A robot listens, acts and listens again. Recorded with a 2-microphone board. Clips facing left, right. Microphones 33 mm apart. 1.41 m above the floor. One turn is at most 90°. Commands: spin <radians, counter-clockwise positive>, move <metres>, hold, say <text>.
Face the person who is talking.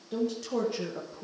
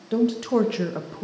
spin -1.22
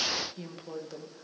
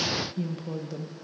say Facing the woman speaking, 1 to 2 m away.